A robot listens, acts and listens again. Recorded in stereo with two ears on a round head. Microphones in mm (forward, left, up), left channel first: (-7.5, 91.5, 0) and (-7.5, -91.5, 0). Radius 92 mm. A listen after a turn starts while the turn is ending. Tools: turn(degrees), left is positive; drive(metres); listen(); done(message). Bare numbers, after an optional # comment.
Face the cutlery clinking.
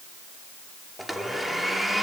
listen()
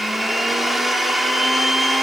listen()
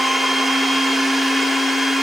done("I can't make out cutlery clinking, only a blender.")